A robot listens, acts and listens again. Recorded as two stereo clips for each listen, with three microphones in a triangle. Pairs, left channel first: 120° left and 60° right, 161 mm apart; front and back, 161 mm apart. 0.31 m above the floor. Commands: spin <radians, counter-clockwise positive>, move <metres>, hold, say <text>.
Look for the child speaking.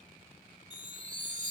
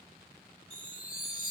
hold
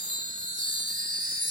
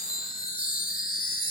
hold
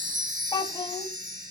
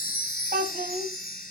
spin 3.14
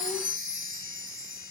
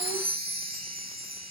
hold
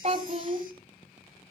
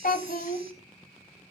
spin -0.35
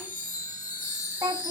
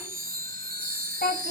say Facing the child speaking, 1 to 2 m away.